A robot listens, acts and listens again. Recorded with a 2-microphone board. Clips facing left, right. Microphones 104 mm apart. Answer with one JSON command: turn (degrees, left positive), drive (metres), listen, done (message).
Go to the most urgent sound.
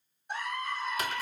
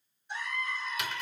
{"turn": 55}
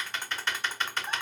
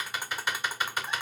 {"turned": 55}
{"listen": true}
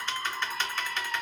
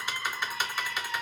{"turn": 55}
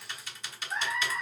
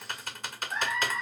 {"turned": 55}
{"drive": 1.0}
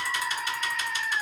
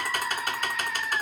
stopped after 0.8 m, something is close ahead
{"done": "Arrived at the scream, straight ahead."}